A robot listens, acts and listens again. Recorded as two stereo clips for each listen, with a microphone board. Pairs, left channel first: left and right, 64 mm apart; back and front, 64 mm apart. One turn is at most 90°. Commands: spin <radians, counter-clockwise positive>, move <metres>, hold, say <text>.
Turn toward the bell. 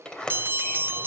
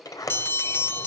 spin -1.57
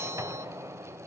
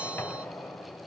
spin -0.87
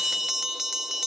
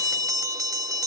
say Found it: a bell, straight ahead, under 1 m away.